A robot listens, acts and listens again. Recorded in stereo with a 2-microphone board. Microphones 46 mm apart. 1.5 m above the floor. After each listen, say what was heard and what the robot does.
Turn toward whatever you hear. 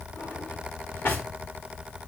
The drawer: about 55° left or 125° left. Turn 55° left.
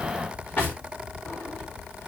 So it is at 50° left. Turn 50° left.
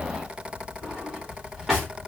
Facing the drawer, 1 to 2 m away.